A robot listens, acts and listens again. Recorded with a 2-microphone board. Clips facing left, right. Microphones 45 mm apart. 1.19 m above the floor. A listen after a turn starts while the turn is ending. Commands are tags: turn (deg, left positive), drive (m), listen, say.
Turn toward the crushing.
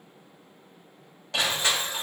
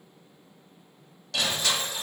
<turn deg="25"/>
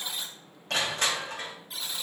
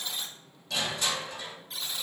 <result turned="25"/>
<turn deg="130"/>
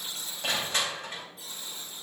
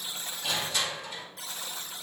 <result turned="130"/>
<turn deg="45"/>
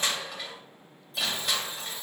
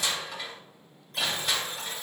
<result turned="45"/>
<say>Facing the crushing.</say>